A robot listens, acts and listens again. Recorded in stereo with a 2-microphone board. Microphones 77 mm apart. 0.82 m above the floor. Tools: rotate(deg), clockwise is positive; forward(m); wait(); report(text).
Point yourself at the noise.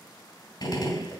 rotate(-60)
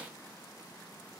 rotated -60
wait()
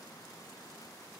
report("I heard a gunshot, but can't make it out now. It was about straight ahead or 60° left.")